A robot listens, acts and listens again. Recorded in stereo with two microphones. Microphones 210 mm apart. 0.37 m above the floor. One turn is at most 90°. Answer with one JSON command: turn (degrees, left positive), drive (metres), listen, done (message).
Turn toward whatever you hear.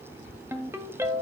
{"turn": -30}
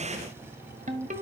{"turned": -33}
{"turn": -90}
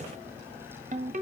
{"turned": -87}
{"turn": -45}
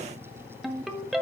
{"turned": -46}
{"done": "Facing the ringtone."}